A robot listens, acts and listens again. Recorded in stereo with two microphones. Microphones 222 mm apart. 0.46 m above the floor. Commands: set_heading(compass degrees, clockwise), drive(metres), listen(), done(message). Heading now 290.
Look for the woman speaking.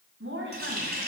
set_heading(355)
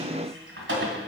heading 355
listen()
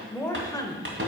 set_heading(335)
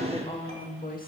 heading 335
set_heading(295)
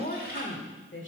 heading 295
set_heading(235)
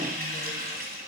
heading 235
listen()
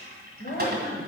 set_heading(185)
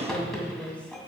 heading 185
done("Found it: a woman speaking, straight ahead, 1 to 2 m away.")